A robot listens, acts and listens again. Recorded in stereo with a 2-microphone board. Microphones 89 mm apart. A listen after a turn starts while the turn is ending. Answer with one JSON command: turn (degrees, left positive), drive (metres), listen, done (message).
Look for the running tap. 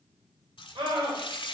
{"turn": 65}
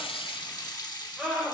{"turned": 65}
{"turn": 45}
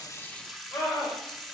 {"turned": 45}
{"done": "Found it: a running tap, straight ahead."}